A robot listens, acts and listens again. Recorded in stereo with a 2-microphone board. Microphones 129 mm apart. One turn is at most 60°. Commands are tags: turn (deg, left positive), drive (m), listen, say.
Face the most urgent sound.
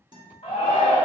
<turn deg="45"/>
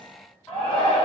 <turn deg="10"/>
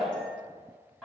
<listen/>
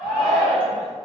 <say>Found it: a shout, straight ahead, 1 to 2 m away.</say>